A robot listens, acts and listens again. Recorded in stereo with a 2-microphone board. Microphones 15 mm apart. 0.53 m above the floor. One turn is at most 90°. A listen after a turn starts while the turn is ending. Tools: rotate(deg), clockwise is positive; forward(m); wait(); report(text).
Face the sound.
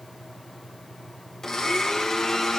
rotate(-35)
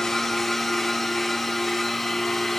report("Facing the blender.")